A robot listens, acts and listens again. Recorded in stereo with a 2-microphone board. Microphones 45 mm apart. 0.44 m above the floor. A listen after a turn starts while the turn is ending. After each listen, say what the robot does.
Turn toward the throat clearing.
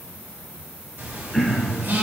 Turn 30° left.
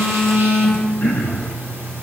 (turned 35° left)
Turn 145° left.
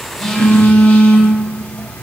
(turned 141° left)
Keep listening.
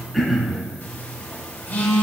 Found it: throat clearing, straight ahead.